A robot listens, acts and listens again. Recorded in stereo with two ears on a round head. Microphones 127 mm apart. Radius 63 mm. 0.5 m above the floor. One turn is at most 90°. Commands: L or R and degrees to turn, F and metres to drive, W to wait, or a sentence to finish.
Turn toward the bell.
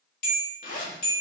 L65
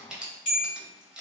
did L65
L50
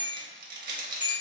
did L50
R10
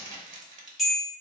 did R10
Found it: a bell, straight ahead, 1 to 2 m away.